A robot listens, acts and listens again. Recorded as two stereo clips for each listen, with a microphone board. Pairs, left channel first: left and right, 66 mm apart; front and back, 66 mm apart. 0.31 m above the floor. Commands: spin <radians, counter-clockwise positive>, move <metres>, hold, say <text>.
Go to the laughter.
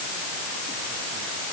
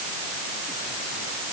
hold
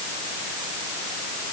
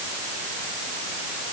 hold
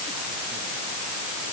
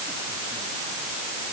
say I can't make out laughter to turn to.